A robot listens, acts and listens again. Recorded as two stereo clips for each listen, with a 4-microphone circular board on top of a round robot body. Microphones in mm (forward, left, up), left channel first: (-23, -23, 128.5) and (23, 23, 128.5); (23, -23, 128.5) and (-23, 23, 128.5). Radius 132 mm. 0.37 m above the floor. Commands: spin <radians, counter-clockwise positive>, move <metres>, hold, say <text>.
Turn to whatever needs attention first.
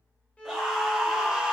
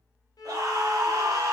spin 2.27
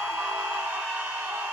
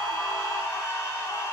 spin -0.26
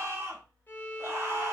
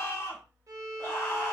say Facing the scream.